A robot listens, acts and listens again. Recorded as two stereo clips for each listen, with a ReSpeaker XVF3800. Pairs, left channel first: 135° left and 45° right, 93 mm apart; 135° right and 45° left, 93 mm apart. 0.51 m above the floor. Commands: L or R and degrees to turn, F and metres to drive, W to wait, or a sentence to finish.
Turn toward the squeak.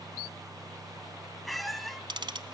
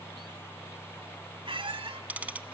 L45
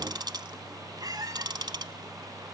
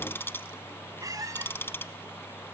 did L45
Found it: a squeak, straight ahead.